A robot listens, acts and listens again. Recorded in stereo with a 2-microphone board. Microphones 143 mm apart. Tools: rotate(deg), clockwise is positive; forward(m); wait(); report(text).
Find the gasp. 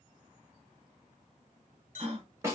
rotate(45)
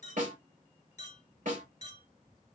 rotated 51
wait()
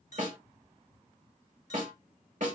report("I heard a gasp, but can't make it out now. It was about 10° left or 85° right.")